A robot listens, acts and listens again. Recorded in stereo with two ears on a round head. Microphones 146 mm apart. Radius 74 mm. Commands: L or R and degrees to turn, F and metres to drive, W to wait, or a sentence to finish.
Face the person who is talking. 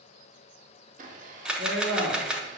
R60
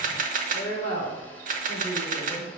L15
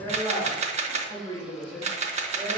L10
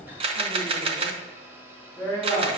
Facing the woman speaking.